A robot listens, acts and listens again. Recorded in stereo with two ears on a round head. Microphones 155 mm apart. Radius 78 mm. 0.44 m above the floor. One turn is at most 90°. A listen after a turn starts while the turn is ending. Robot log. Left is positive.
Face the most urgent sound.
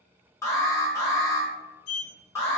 note: The alarm: about 15° left or 165° left.
cmd yaw +15
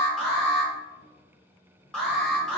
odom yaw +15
end: Found it: an alarm, straight ahead.